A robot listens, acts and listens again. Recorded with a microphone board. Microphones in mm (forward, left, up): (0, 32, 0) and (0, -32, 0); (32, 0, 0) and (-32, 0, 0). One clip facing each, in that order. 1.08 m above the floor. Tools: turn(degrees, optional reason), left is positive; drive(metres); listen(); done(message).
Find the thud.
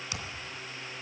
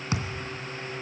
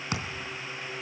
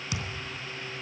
turn(degrees=-45, reason="The thud: 45° right.")
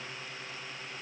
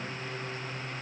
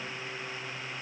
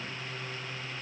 done("Facing where the thud came from. I can't hear it now.")